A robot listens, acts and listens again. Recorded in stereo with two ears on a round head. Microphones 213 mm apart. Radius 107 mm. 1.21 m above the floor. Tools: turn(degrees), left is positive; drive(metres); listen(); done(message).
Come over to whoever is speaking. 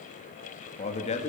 turn(degrees=30)
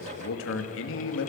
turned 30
turn(degrees=120)
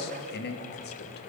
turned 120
turn(degrees=45)
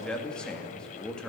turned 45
drive(metres=1.0)
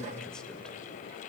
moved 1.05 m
drive(metres=1.0)
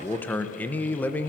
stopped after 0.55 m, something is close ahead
turn(degrees=10)
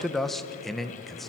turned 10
done("Arrived at the man speaking, straight ahead.")